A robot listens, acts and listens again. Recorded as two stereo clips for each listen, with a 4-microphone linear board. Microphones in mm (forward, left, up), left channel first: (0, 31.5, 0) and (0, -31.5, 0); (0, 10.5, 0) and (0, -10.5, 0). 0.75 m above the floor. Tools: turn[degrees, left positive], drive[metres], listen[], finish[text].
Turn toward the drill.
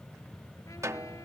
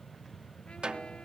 Action: listen[]
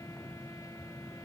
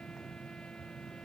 Action: listen[]
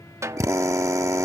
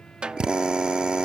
Thought: The drill: about 50° right or 130° right.
Action: turn[-50]
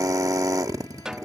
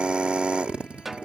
Thought: So it is at 70° right.
Action: turn[-70]
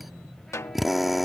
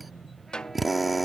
Action: finish[Facing the drill.]